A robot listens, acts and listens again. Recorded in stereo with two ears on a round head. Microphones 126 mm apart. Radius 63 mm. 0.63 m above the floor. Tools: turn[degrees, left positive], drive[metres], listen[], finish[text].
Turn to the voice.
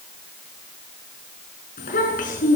Thought: The child speaking: about 60° left or 120° left.
Action: turn[60]
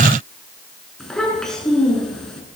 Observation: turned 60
Action: finish[Facing the child speaking.]